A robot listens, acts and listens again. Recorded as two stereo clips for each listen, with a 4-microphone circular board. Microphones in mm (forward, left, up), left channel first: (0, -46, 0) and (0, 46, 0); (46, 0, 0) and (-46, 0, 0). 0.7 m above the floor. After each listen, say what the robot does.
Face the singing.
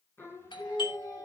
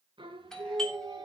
Turn 145° right.
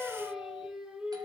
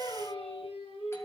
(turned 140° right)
Turn 10° left.
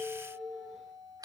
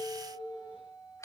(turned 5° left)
Turn 10° left.
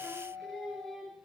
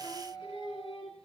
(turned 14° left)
Found it: singing, straight ahead, over 4 m away.